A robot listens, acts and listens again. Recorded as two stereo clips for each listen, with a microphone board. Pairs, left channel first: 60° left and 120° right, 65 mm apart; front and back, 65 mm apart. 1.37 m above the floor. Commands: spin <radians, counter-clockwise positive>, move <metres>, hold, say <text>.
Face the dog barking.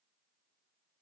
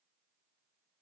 hold
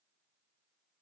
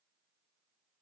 hold
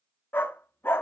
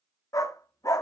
spin 0.17
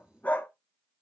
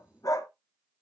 say Facing the dog barking.